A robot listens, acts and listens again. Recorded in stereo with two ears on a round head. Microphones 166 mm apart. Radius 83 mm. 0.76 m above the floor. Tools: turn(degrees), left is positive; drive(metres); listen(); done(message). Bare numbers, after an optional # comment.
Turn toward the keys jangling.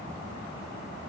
listen()
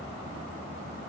listen()
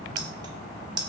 # The keys jangling: about 25° right or 155° right.
turn(-25)
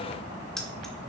listen()
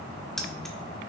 done("Facing the keys jangling, 1 to 2 m away.")